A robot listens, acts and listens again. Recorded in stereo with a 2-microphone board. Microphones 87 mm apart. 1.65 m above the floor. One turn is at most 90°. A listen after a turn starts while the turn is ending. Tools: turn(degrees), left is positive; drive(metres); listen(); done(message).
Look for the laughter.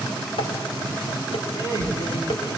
turn(degrees=45)
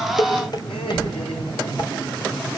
turn(degrees=90)
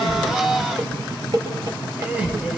turn(degrees=-15)
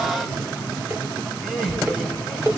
done("Facing the laughter.")